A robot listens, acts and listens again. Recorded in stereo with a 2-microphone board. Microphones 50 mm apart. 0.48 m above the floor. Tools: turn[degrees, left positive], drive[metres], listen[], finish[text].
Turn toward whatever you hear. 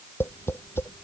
Thought: The tapping: about 50° left or 130° left.
Action: turn[50]
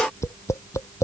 Thought: So it is at 80° left.
Action: turn[80]
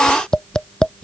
Thought: The tapping is now 15° left.
Action: turn[15]
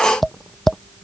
Action: finish[Found it: tapping, straight ahead.]